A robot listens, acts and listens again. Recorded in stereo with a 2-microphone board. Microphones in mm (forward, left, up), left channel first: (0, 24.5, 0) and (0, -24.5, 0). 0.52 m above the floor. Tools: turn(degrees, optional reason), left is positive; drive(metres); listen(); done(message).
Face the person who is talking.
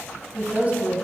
turn(degrees=-35, reason="The woman speaking: about 35° right or 145° right.")
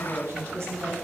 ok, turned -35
turn(degrees=-110, reason="So it is at 110° right.")
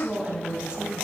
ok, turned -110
turn(degrees=-20, reason="The woman speaking is now 20° right.")
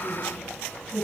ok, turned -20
done("Facing the woman speaking.")